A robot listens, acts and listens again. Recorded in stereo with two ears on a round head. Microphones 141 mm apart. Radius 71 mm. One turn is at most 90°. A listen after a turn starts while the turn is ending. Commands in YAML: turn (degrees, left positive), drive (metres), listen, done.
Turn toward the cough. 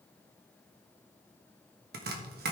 listen: true
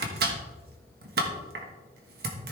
listen: true
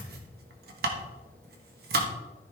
done: "I can't make out a cough to turn to."